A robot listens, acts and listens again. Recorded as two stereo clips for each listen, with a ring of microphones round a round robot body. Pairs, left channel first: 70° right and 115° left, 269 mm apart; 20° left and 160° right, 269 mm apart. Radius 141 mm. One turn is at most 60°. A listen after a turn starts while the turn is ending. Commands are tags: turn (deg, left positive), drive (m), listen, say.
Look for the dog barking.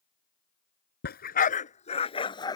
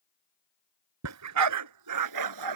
<turn deg="-60"/>
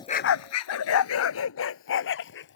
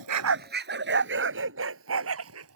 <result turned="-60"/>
<turn deg="-60"/>
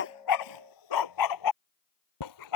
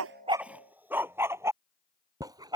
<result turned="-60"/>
<turn deg="-60"/>
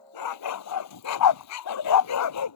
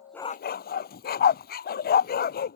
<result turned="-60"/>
<turn deg="-35"/>
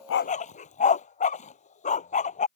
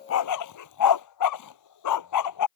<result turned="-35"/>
<say>Facing the dog barking.</say>